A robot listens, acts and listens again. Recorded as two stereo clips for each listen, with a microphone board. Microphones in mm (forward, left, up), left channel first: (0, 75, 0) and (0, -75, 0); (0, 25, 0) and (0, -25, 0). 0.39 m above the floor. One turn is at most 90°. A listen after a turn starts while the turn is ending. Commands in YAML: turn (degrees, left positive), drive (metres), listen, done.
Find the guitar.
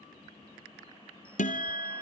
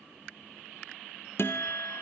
turn: 55
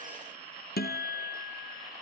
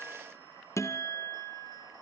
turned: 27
turn: 90
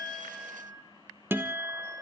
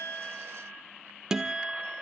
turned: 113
turn: -15
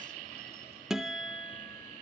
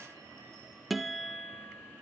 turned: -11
done: "Facing the guitar."